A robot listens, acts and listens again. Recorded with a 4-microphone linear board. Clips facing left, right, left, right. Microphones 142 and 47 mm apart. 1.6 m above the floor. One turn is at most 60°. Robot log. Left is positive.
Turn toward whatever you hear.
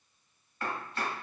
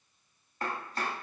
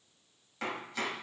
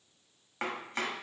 note: The chopping: about 40° right or 140° right.
cmd yaw -40
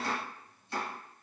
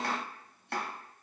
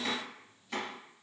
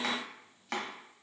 note: So it is at 100° right.
cmd yaw -60
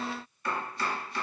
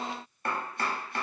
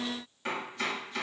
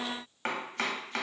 note: The chopping is now 60° right.
cmd yaw -60
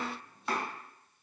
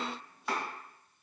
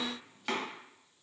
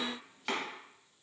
end: Found it: chopping, straight ahead, under 1 m away.